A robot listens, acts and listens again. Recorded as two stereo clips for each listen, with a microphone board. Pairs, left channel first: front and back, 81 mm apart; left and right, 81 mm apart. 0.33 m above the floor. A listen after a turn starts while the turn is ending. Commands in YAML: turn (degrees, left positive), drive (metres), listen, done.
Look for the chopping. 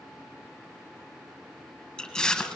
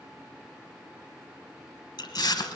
listen: true
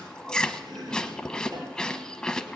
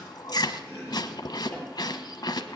turn: 160
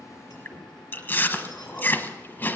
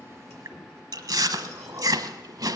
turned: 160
listen: true
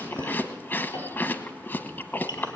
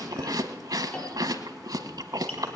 turn: 20
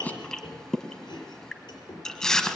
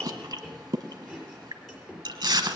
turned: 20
done: "Facing the chopping."